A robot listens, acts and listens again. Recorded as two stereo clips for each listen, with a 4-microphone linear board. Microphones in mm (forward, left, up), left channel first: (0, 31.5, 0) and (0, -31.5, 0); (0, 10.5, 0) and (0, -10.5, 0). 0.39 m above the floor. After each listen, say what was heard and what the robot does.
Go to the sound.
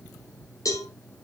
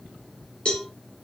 The cowbell: about 65° left or 115° left. Turn 65° left.
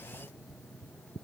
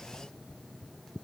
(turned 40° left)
Keep listening.
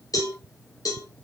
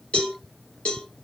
So it is at 75° left. Turn 75° left.
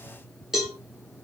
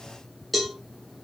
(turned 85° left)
The cowbell is now 10° right. Turn 10° right.
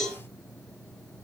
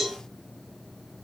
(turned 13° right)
Drive 1.0 m forward.
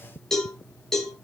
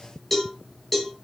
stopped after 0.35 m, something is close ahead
Blocked. The cowbell is further on, straight ahead.